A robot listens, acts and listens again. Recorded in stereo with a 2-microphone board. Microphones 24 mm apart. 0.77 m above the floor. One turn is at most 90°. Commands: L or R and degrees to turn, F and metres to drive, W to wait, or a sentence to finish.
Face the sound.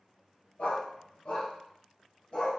L40
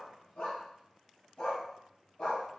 L90
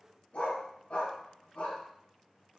L75
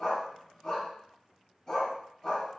L10
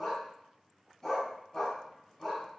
Found it: a dog barking, straight ahead.